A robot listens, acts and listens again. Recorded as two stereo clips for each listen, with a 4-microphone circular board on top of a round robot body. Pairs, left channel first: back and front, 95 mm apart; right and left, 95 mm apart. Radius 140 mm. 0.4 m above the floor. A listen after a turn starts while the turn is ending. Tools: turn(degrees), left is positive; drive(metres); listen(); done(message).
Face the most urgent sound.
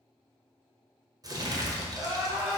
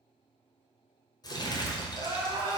turn(degrees=65)
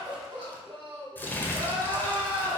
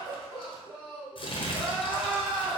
done("Found it: crying, straight ahead, 1 to 2 m away.")